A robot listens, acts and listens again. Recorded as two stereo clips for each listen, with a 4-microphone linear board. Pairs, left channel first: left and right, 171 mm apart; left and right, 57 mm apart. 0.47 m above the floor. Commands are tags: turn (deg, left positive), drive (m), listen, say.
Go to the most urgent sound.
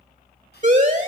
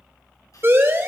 <turn deg="-45"/>
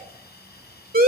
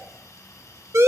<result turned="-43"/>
<turn deg="-80"/>
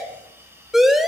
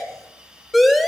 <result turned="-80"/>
<drive m="1.0"/>
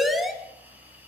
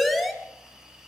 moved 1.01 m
<drive m="1.0"/>
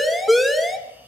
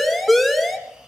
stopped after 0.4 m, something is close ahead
<say>I am next to the siren.</say>